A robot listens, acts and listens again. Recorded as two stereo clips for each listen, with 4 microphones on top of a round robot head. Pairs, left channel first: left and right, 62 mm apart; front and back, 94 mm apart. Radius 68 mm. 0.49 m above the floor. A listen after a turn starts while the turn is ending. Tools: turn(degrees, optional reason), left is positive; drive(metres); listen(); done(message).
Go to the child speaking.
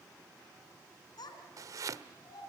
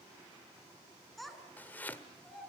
turn(degrees=90, reason="The child speaking: 90° left.")
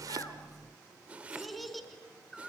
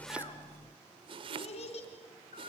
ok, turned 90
drive(metres=1.0)
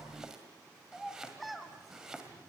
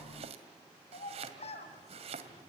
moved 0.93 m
drive(metres=1.0)
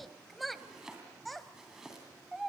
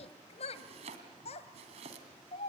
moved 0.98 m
drive(metres=1.0)
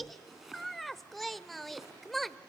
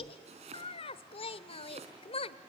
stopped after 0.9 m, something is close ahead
done("Arrived at the child speaking, straight ahead.")